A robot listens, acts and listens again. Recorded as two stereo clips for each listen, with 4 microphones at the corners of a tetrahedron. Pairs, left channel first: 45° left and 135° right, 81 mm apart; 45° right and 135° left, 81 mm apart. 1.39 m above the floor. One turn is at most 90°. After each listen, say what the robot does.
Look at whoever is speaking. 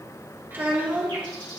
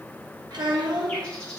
Turn 90° left.
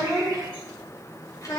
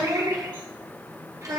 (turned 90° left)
Turn 90° left.
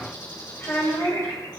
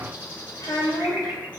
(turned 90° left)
Turn 10° right.
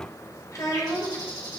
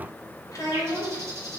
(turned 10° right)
Found it: a child speaking, straight ahead, 1 to 2 m away.